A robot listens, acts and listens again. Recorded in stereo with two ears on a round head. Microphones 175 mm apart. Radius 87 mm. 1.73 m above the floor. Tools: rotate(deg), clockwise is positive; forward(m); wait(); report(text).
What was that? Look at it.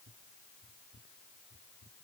wait()
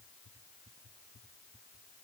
wait()
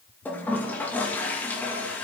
rotate(-30)
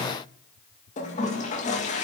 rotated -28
rotate(-140)
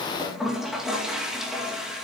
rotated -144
report("Facing the toilet flushing, 2 to 4 m away.")